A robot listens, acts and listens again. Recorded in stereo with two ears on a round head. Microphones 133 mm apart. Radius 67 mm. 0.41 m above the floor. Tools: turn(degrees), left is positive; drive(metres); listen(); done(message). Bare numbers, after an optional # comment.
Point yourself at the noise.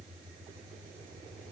listen()
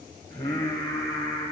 # The singing: about 25° left or 155° left.
turn(25)
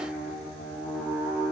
done("Found it: singing, straight ahead, over 4 m away.")